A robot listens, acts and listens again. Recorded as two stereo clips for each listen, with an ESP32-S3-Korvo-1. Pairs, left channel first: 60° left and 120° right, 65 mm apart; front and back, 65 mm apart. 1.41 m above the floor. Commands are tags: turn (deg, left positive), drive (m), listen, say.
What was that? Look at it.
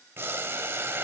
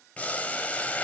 <turn deg="-70"/>
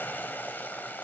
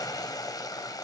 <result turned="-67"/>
<say>Facing the boiling.</say>